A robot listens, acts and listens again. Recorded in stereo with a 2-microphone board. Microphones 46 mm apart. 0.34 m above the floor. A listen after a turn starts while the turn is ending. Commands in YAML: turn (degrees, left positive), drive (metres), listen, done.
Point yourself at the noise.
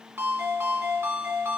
turn: -65
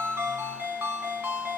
turn: -45
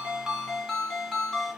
turn: 10
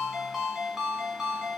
done: "Facing the ringtone."